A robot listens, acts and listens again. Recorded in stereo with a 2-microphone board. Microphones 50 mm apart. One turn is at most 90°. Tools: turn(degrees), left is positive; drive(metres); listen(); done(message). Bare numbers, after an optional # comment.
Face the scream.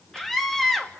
turn(30)
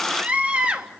# So it is at 30° right.
turn(-30)
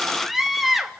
done("Found it: a scream, straight ahead.")